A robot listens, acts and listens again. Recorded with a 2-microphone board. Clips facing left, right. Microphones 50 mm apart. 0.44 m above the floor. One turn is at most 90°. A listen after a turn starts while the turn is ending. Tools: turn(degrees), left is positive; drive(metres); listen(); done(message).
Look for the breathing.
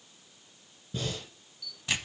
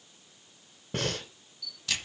turn(degrees=-65)
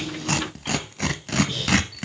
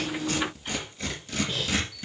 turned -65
done("Found it: breathing, straight ahead, 1 to 2 m away.")